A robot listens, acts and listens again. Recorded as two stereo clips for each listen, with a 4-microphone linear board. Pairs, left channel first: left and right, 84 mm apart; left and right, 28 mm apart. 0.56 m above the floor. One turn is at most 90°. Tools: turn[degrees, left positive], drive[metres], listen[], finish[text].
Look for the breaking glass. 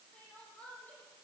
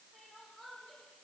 Action: listen[]
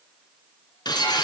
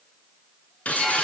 Thought: The breaking glass: about 60° left or 120° left.
Action: turn[60]
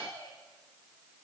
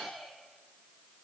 Action: listen[]
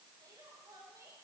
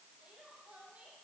Action: finish[I heard breaking glass, but can't make it out now. It was about straight ahead or 60° left.]